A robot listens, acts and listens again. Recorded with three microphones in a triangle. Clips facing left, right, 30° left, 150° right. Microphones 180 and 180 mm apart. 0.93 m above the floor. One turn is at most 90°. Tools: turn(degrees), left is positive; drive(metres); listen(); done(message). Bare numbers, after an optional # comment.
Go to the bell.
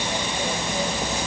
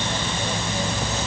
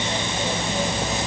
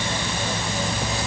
listen()
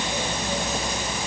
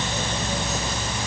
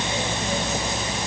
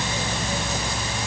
listen()
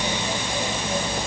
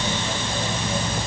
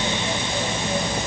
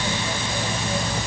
done("I can't make out a bell to turn to.")